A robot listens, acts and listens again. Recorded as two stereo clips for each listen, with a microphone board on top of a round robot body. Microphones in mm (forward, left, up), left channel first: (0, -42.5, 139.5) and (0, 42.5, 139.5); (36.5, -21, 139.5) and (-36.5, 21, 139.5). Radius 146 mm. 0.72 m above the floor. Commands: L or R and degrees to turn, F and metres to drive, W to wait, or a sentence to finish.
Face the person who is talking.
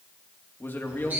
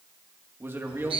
R150
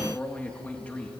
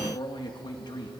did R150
R20
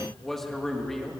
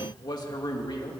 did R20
Facing the man speaking.